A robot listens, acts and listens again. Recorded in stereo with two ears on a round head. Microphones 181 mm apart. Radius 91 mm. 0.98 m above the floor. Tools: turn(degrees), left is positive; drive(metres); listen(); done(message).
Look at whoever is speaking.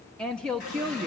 turn(degrees=30)
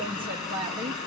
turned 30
turn(degrees=-25)
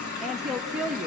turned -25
done("Facing the woman speaking, under 1 m away.")